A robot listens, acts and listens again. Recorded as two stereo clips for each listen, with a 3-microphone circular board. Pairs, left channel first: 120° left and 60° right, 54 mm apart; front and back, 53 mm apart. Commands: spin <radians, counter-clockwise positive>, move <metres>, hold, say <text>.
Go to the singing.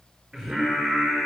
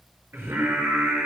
spin -2.36
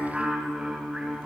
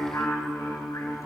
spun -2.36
spin 0.35
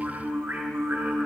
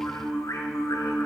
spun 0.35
move 1.0
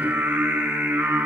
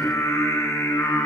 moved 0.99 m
spin -0.17
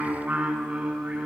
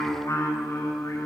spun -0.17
move 1.0
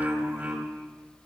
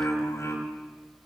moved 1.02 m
move 1.0
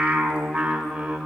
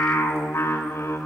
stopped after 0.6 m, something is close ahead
spin 0.26
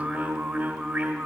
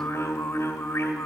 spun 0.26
say Arrived at the singing, straight ahead.